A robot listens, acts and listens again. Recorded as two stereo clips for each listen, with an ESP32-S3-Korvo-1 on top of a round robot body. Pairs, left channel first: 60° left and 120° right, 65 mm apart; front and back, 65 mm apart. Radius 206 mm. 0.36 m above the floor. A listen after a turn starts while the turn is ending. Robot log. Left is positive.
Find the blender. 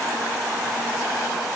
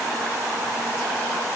cmd idle
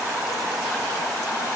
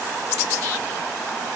cmd idle
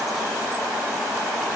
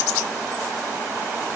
end: I can't make out a blender to turn to.